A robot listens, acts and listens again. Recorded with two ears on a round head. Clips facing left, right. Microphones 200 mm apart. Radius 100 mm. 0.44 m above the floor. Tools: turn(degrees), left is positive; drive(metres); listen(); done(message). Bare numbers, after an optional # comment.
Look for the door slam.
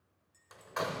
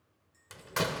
# The door slam: about 40° right or 140° right.
turn(-40)
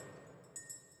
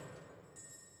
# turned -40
listen()
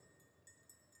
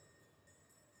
done("I heard a door slam, but can't make it out now. It was about straight ahead or 100° right.")